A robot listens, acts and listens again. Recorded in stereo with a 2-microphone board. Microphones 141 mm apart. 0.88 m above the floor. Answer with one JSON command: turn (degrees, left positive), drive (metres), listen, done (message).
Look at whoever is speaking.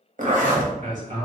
{"turn": -60}
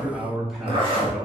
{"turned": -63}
{"done": "Found it: a man speaking, straight ahead, 1 to 2 m away."}